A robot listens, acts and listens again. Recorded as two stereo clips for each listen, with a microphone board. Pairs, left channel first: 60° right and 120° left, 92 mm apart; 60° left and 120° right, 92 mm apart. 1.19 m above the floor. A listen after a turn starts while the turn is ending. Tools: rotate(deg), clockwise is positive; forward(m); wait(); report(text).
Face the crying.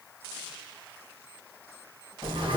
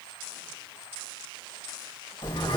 wait()
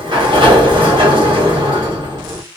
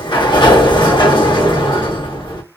wait()
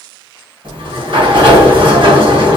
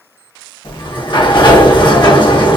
report("I can't make out crying, only a sliding door.")